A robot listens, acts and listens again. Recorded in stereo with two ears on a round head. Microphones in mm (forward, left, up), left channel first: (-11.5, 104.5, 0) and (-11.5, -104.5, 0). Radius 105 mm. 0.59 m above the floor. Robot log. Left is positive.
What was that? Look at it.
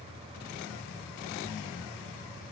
cmd idle
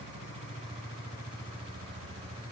cmd idle
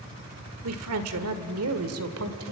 note: The woman speaking: about 65° right or 115° right.
cmd yaw -65
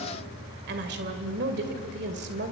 note: So it is at 45° right.
cmd yaw -45
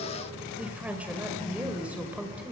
end: Found it: a woman speaking, straight ahead, 2 to 4 m away.